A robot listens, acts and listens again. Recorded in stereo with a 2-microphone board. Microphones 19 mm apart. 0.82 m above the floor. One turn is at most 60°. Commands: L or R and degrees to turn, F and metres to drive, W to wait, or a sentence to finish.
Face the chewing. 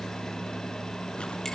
W
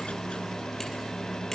W
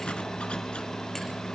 I can't make out chewing to turn to.